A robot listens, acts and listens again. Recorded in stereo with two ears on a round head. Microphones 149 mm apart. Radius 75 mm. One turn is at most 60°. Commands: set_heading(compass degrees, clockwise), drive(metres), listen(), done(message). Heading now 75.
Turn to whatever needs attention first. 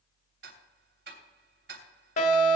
set_heading(25)
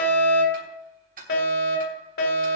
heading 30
set_heading(330)
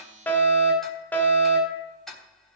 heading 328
set_heading(318)
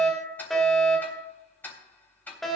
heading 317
done("Facing the fire alarm.")